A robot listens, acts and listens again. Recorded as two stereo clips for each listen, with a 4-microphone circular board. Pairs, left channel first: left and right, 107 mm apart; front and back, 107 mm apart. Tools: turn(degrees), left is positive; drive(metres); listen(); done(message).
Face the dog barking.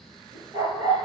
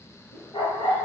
turn(degrees=-35)
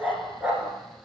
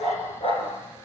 turn(degrees=-15)
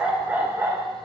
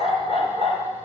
turn(degrees=-20)
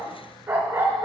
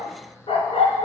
turn(degrees=-30)
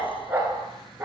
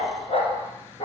turn(degrees=-20)
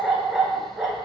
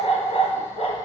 done("Facing the dog barking.")